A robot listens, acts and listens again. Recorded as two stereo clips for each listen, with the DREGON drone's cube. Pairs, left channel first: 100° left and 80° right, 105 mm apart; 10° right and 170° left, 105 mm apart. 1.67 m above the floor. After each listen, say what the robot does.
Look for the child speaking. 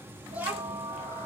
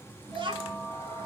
Turn 155° right.
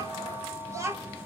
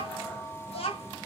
Turn 15° right.
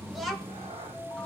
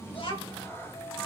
Turn 15° left.
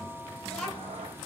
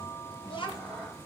Turn 15° left.
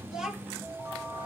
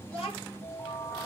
Facing the child speaking.